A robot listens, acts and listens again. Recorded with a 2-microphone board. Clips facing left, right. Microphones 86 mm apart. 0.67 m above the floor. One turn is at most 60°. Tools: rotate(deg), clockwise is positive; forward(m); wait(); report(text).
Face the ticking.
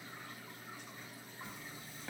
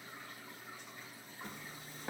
wait()
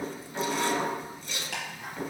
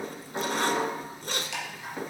rotate(-50)
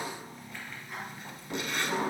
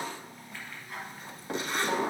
report("Found it: ticking, straight ahead, over 4 m away.")